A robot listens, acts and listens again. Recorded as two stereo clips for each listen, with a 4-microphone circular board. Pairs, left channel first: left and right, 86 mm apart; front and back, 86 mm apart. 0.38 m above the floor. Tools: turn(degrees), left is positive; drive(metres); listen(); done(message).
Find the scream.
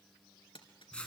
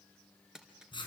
listen()
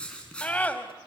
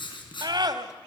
turn(degrees=160)
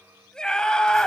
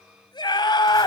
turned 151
turn(degrees=10)
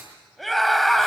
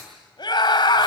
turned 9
done("Facing the scream.")